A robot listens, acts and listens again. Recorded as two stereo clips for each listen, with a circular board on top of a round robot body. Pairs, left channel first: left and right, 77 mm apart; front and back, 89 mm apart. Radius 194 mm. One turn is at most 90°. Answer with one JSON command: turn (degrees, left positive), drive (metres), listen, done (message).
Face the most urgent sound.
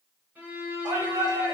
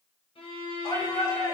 {"turn": -60}
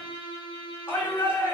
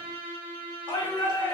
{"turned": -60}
{"turn": 30}
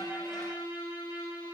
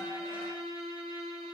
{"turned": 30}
{"listen": true}
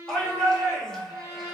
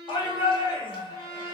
{"turn": 10}
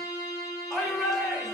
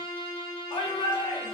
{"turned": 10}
{"done": "Facing the shout."}